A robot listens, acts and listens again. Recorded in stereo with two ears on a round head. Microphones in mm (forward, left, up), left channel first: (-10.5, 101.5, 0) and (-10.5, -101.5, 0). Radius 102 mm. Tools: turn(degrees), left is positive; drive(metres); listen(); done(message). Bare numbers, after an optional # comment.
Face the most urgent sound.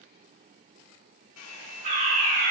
# The fire alarm: about 40° right or 140° right.
turn(-40)
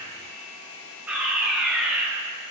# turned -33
done("Found it: a fire alarm, straight ahead.")